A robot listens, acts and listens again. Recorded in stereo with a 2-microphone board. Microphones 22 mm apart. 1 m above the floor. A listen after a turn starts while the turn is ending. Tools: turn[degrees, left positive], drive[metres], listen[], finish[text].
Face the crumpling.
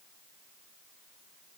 Action: listen[]
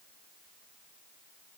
Action: listen[]
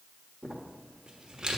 Thought: The crumpling: about 35° right or 145° right.
Action: turn[-35]
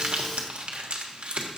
Thought: So it is at 105° right.
Action: turn[-105]
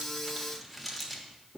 Action: finish[Facing the crumpling.]